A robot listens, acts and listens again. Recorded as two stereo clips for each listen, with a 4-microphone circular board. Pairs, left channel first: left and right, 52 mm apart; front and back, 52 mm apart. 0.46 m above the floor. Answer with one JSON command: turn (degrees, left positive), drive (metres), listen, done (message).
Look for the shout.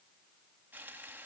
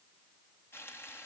{"listen": true}
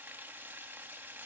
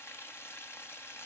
{"listen": true}
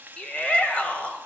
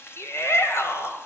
{"turn": 20}
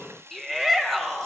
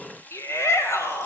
{"done": "Found it: a shout, straight ahead."}